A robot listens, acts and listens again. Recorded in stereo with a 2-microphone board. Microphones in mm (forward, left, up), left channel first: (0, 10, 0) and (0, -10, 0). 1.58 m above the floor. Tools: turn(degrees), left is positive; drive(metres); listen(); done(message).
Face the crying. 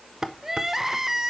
turn(degrees=-25)
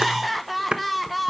done("Facing the crying, 1 to 2 m away.")